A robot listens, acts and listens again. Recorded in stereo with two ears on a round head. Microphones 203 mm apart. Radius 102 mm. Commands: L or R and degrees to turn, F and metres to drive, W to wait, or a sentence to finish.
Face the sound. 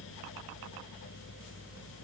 W
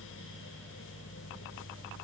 W
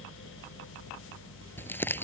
L30
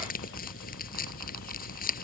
L140
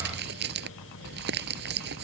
R45
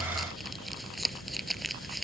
Found it: crumpling, straight ahead.